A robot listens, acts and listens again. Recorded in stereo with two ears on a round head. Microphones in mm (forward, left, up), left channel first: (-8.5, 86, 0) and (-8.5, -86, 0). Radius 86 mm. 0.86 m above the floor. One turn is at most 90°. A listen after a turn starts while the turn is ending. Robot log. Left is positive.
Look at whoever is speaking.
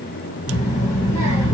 note: The child speaking: about 20° left or 160° left.
cmd yaw +20
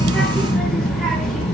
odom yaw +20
end: Found it: a child speaking, straight ahead.